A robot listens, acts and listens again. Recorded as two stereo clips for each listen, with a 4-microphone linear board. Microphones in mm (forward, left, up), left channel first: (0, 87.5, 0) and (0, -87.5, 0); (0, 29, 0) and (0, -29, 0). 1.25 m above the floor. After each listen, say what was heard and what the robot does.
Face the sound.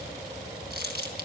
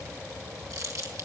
The crumpling: about 70° right or 110° right. Turn 70° right.
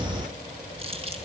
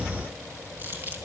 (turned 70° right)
So it is at 35° right. Turn 35° right.
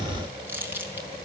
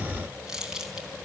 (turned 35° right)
The crumpling is now 10° right. Turn 10° right.
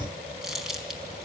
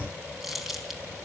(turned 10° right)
Found it: crumpling, straight ahead.